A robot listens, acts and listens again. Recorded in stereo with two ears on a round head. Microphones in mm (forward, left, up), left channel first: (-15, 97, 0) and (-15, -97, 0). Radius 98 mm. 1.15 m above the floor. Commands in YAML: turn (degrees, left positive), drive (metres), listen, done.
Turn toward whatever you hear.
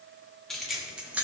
turn: -30
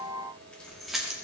turn: -30
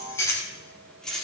turn: 30
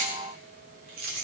turn: -45
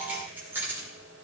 turn: -10
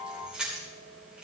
done: "Facing the keys jangling."